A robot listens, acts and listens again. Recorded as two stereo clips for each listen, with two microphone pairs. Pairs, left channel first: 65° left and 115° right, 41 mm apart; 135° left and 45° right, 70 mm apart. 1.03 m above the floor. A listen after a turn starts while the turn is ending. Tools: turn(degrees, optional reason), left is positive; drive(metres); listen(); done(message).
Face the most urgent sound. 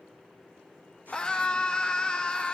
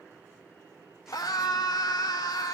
turn(degrees=125, reason="The scream: 125° left.")
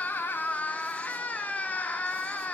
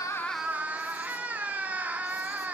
turn(degrees=20, reason="The scream is now 20° left.")
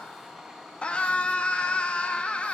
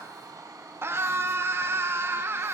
done("Found it: a scream, straight ahead.")